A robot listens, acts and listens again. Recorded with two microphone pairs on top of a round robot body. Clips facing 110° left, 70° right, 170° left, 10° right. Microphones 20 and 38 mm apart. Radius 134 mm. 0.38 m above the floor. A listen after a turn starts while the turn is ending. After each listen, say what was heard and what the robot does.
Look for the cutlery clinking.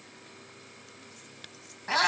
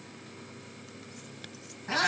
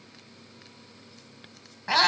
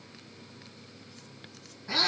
Keep listening.
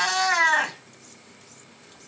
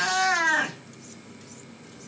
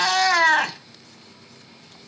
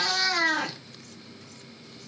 Keep listening.
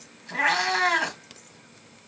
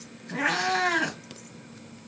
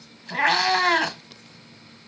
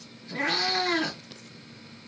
I can't make out cutlery clinking to turn to.